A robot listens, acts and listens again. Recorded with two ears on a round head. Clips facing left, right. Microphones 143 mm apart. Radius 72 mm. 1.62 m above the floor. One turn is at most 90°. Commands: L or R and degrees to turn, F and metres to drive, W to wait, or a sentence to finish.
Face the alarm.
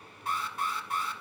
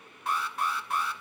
R55
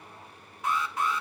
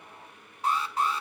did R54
R35
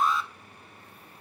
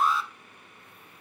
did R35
Facing the alarm.